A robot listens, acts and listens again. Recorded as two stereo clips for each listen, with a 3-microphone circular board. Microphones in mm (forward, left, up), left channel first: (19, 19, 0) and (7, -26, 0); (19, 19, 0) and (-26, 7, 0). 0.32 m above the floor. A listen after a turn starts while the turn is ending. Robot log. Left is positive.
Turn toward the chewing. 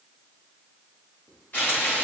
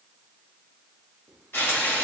cmd idle
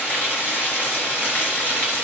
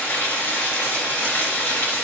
cmd idle
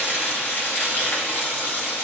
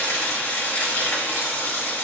end: I can't make out chewing, only frying.